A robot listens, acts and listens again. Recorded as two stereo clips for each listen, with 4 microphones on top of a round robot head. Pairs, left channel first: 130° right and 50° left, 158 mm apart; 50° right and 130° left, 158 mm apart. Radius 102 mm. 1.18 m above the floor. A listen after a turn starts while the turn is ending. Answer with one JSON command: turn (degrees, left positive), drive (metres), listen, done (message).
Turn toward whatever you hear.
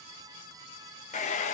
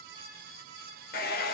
{"turn": -85}
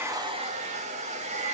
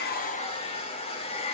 {"done": "Facing the hair dryer."}